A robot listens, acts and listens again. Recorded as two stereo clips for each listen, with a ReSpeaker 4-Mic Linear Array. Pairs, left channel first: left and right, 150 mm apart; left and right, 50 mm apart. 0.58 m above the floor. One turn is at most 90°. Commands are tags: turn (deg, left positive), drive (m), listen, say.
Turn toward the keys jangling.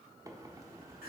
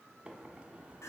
<listen/>
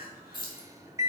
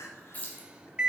<turn deg="30"/>
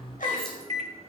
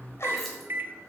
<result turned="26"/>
<listen/>
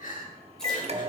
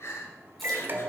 <listen/>
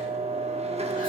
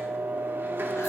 <say>I heard keys jangling, but can't make it out now. It was about 5° left or 125° left.</say>